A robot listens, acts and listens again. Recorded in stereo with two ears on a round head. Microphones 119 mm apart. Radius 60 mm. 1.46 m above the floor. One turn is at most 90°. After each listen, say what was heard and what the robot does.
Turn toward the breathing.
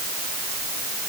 Keep listening.
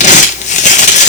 Keep listening.
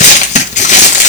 I can't make out breathing, only crumpling.